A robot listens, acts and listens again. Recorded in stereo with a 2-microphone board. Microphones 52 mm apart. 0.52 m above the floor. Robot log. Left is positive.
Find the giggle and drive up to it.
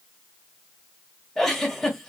cmd yaw +30
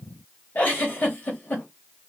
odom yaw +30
note: So it is at 145° left.
cmd yaw +145
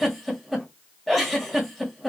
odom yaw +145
cmd fwd 1.0
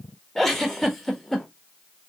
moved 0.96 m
note: The giggle is now 10° left.
cmd yaw +10
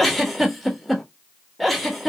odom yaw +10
cmd fwd 1.0
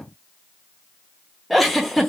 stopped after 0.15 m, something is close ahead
end: I am next to the giggle.